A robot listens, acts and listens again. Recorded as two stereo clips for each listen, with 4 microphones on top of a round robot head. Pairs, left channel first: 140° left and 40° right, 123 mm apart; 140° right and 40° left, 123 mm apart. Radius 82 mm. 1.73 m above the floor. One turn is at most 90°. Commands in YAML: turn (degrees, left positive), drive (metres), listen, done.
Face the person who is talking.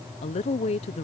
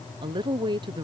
turn: 90
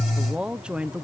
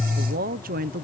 turn: 40
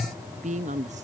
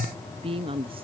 turn: -10
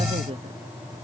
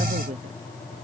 done: "Found it: a woman speaking, straight ahead."